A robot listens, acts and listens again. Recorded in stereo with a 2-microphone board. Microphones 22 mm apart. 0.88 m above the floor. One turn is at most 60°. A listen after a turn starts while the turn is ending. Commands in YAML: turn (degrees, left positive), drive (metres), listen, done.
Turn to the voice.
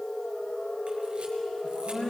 turn: 50
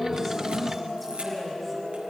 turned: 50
listen: true
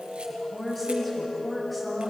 done: "Facing the woman speaking."